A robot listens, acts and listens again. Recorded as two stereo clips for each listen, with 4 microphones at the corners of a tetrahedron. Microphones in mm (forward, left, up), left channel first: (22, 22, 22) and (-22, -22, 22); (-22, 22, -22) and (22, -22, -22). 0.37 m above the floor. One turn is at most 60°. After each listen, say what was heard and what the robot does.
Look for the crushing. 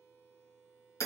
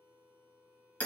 Keep listening.
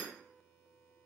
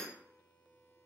Keep listening.
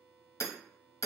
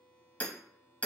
I can't make out crushing, only hammering.